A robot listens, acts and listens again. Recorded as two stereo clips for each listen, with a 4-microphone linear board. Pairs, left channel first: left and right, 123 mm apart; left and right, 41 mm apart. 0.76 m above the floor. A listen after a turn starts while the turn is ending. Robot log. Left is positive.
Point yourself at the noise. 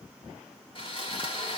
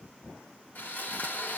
note: The sawing: about 45° left or 135° left.
cmd yaw +45
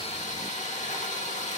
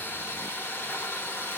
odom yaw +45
note: So it is at 90° left.
cmd yaw +90
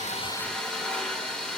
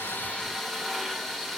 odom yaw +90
end: Facing the sawing.